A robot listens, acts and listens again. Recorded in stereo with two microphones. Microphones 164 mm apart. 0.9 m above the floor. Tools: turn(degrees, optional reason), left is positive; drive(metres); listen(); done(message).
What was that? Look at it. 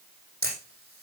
turn(degrees=-60, reason="The camera shutter: about 60° right or 120° right.")
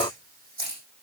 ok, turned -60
turn(degrees=-60, reason="So it is at 60° right.")
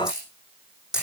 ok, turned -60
done("Facing the camera shutter.")